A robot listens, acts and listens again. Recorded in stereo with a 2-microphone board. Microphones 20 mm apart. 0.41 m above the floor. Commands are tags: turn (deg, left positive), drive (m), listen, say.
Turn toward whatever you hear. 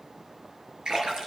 <turn deg="-45"/>
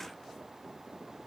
<listen/>
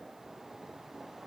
<say>I heard a splash, but can't make it out now. It was about straight ahead or 90° right.</say>